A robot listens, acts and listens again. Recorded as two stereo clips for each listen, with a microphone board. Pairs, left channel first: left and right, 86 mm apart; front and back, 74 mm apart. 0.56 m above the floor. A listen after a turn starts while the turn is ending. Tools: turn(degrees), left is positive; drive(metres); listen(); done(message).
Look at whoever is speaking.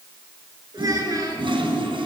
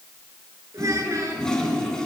turn(degrees=-135)
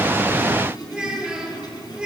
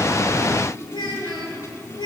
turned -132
turn(degrees=-10)
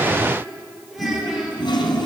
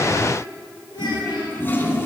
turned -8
done("Facing the child speaking, over 4 m away.")